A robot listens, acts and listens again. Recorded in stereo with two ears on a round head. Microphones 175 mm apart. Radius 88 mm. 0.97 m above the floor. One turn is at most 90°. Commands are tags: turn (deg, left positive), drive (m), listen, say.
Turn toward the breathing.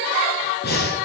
<turn deg="60"/>
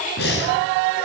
<turn deg="60"/>
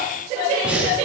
<say>Facing the breathing, over 4 m away.</say>